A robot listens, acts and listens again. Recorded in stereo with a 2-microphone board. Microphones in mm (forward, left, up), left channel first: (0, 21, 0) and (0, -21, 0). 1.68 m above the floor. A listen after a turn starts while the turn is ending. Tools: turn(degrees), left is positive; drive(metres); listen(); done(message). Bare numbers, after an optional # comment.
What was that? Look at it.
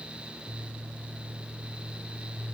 listen()
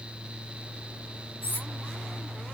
# The cutlery clinking: about 55° left or 125° left.
turn(55)
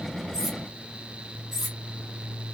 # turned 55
done("Facing the cutlery clinking, 2 to 4 m away.")